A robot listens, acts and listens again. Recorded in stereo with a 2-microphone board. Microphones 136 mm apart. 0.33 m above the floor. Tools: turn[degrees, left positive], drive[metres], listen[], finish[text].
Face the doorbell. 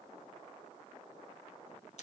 Action: listen[]
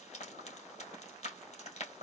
Action: listen[]
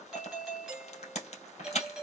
Action: turn[30]
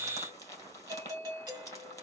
Thought: So it is at 30° right.
Action: turn[-30]
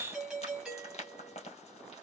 Action: finish[Found it: a doorbell, straight ahead, 2 to 4 m away.]